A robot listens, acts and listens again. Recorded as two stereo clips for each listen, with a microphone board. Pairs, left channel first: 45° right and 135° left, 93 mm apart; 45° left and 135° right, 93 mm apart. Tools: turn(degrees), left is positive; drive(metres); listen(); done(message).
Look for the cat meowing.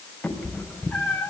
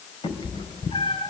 turn(degrees=30)
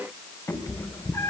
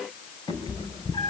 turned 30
turn(degrees=10)
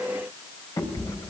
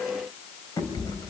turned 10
done("Found it: a cat meowing, straight ahead, 2 to 4 m away.")